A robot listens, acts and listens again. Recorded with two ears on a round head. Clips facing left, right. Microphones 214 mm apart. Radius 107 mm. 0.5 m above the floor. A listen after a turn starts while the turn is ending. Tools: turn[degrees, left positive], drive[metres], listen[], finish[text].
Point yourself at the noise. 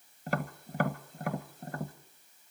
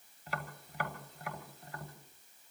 Thought: The tapping: about 40° left or 140° left.
Action: turn[40]
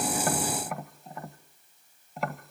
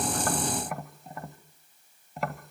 Action: finish[Found it: tapping, straight ahead.]